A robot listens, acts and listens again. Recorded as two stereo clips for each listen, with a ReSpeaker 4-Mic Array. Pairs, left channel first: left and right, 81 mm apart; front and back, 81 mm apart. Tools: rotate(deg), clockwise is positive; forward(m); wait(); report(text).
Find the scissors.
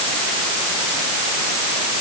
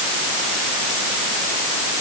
wait()
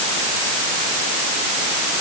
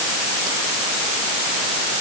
wait()
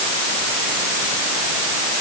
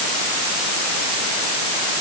report("I can't make out scissors to turn to.")